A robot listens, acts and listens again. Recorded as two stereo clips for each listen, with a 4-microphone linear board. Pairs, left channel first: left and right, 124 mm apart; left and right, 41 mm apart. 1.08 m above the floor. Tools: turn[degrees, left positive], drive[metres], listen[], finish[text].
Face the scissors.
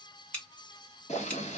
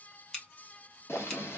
Action: turn[30]
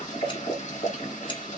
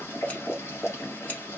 Action: listen[]
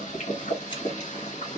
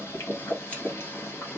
Action: listen[]
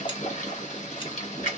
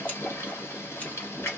Action: finish[I heard scissors, but can't make it out now. It was about 20° right or 140° left.]